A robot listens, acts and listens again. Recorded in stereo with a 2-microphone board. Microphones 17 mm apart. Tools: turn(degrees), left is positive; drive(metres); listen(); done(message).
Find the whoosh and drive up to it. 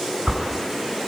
turn(degrees=-70)
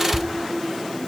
drive(metres=1.0)
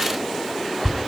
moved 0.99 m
drive(metres=1.0)
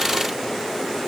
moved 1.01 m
listen()
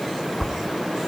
drive(metres=1.0)
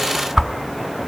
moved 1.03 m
turn(degrees=-10)
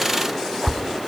drive(metres=1.0)
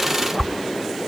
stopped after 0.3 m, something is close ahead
done("Arrived at the whoosh, straight ahead.")